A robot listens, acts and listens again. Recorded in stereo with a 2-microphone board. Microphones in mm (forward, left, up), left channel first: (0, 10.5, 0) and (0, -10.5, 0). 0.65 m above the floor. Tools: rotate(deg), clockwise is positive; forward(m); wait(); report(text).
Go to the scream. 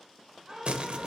rotate(30)
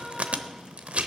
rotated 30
wait()
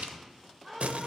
forward(1.0)
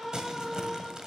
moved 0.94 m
forward(1.0)
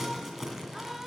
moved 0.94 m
wait()
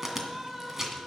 rotate(15)
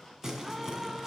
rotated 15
forward(1.0)
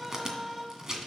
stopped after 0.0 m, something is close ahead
report("Arrived at the scream, straight ahead.")